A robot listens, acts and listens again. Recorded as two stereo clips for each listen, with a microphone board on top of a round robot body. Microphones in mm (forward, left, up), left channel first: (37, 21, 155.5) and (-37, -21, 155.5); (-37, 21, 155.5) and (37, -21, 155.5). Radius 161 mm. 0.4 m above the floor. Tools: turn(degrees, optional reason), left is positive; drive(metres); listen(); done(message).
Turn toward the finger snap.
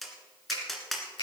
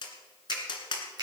turn(degrees=10, reason="The finger snap: 10° left.")
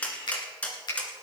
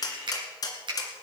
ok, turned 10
done("Facing the finger snap.")